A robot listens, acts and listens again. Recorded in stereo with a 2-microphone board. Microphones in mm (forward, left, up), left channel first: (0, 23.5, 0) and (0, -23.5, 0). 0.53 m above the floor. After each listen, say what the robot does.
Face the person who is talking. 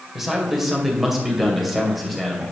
Turn 30° left.
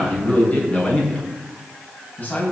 Turn 145° left.
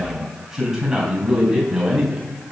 Facing the man speaking.